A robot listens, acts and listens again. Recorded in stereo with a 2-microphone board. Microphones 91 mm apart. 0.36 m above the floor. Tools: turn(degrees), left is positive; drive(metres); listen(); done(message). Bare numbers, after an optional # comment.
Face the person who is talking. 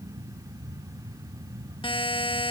listen()
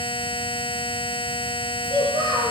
# The child speaking: about 55° right or 125° right.
turn(-55)
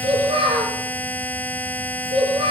# So it is at 70° right.
turn(-70)
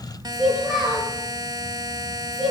done("Facing the child speaking.")